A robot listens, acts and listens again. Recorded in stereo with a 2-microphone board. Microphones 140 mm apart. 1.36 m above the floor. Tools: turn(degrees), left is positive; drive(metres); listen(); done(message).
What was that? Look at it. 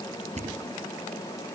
turn(degrees=-55)
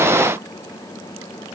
listen()
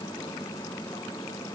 done("I heard a thud, but can't make it out now. It was about straight ahead or 70° right.")